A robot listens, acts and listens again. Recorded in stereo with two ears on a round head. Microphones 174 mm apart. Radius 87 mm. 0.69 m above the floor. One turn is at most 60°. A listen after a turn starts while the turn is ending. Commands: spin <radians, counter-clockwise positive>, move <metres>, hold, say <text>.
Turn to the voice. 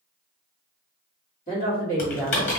spin 0.79
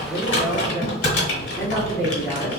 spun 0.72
spin 0.17
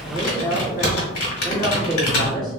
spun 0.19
say Found it: a woman speaking, straight ahead, 1 to 2 m away.